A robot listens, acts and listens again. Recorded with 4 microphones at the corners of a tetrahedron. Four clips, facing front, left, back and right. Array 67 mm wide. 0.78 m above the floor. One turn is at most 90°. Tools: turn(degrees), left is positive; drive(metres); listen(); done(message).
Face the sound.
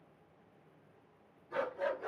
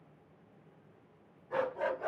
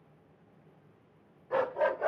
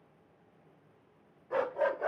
turn(degrees=-90)
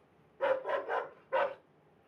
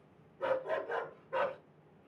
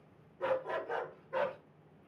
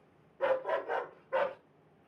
turn(degrees=-30)
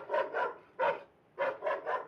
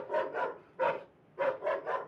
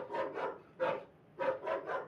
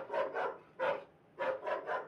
turn(degrees=35)
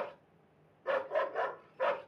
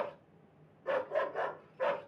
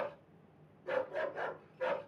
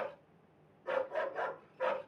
turn(degrees=15)
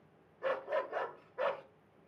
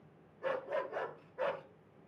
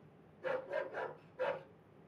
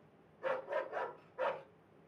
done("Facing the dog barking, 1 to 2 m away.")